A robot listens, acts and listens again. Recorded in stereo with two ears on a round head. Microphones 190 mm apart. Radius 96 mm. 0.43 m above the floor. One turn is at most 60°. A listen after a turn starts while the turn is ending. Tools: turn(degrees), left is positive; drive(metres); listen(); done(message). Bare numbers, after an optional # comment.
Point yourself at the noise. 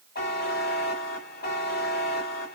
# The buzzer: about 50° left or 130° left.
turn(50)
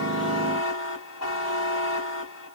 # So it is at 80° left.
turn(60)
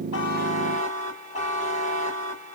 # The buzzer is now 35° left.
turn(35)
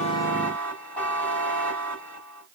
# The buzzer is now 10° left.
turn(10)
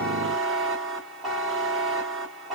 done("Found it: a buzzer, straight ahead.")